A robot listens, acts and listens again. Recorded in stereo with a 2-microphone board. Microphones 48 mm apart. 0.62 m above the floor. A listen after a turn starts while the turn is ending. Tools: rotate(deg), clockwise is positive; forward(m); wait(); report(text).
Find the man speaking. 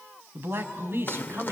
rotate(55)
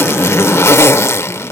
wait()
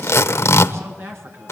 rotate(65)
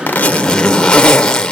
wait()
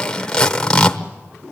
wait()
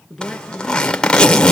report("Found it: a man speaking, straight ahead.")